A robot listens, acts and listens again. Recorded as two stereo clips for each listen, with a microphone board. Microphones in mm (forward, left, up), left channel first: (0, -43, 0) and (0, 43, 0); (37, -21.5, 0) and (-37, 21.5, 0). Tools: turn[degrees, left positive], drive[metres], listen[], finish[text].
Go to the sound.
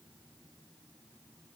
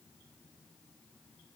Action: listen[]
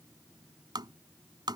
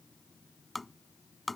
Thought: The tapping: 60° left.
Action: turn[60]
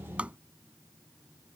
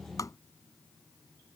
Thought: The tapping is now 15° left.
Action: turn[15]
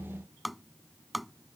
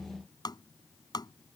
Action: drive[1.0]
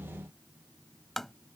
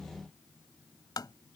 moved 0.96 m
Action: drive[1.0]
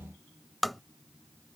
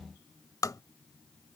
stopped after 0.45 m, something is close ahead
Action: finish[Arrived at the tapping, straight ahead.]